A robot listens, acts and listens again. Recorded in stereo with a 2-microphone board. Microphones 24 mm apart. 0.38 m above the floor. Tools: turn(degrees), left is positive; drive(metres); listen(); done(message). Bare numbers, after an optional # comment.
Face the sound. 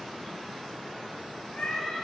# The cat meowing: about 50° left or 130° left.
turn(50)
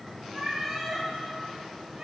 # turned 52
# So it is at 30° right.
turn(-30)
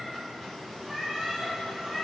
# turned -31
# The cat meowing is now 10° right.
turn(-10)
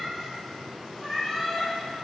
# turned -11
done("Facing the cat meowing.")